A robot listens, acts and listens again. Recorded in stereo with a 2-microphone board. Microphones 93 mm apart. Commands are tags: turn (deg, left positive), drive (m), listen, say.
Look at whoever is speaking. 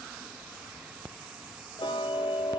<listen/>
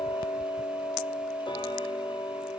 <listen/>
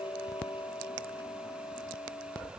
<say>I can't make out anyone speaking to turn to.</say>